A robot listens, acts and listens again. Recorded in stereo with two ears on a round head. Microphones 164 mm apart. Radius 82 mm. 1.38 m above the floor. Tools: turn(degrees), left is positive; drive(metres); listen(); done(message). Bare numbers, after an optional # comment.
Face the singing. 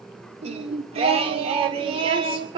# The singing: about 30° right or 150° right.
turn(-30)
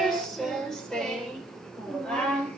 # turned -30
done("Found it: singing, straight ahead.")